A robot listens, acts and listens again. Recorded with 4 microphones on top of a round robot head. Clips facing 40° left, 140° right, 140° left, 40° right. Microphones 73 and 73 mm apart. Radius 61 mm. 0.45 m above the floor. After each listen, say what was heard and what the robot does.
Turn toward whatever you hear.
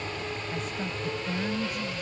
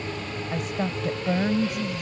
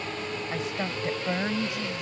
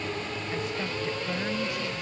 The woman speaking: 155° right. Turn 155° right.
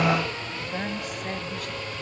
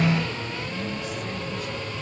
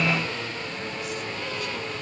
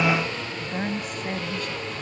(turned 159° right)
Facing the woman speaking.